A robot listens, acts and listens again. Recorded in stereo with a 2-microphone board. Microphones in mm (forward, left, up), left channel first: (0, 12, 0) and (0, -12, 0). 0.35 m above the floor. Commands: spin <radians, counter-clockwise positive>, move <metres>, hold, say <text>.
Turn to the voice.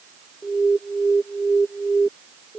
hold
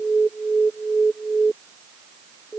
hold
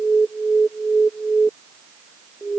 say I can't make out anyone speaking, only an alarm.